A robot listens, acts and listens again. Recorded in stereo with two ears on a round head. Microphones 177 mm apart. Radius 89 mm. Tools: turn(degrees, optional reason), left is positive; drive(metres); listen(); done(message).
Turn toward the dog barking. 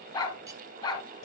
turn(degrees=20, reason="The dog barking: about 20° left or 160° left.")
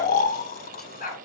turn(degrees=135, reason="So it is at 135° left.")
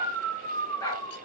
turn(degrees=15, reason="The dog barking is now 15° left.")
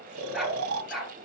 done("Facing the dog barking.")